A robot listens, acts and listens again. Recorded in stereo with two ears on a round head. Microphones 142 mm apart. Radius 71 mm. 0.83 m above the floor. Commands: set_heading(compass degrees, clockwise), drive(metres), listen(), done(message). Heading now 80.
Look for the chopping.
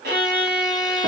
listen()
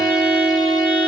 listen()
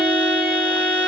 done("I can't make out chopping to turn to.")